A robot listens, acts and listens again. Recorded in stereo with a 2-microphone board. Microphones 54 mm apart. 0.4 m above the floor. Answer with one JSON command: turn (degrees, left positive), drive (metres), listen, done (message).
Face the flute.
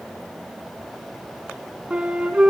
{"turn": -20}
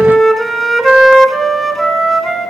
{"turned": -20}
{"done": "Facing the flute, 1 to 2 m away."}